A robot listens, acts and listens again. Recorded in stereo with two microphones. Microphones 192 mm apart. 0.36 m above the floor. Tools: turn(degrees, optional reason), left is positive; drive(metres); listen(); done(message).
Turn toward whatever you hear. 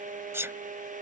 turn(degrees=-30)
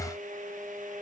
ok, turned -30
listen()
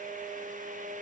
done("I heard a sneeze, but can't make it out now. It was about 15° left or 135° right.")